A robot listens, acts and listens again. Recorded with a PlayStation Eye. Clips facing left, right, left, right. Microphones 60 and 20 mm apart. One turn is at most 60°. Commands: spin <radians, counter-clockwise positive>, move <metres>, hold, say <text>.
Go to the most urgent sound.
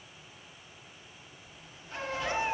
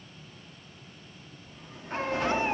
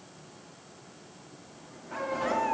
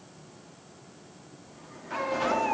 spin -0.79
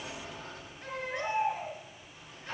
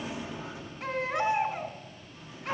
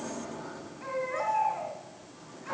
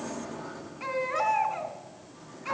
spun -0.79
spin -1.05
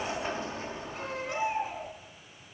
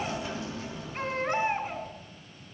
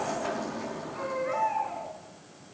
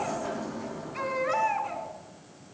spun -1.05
spin -0.79
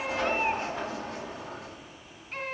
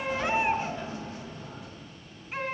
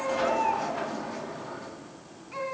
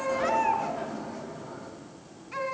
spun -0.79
move 1.0
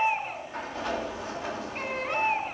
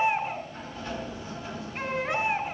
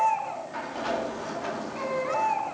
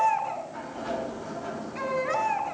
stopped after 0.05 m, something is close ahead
say Blocked. The baby crying is further on, straight ahead.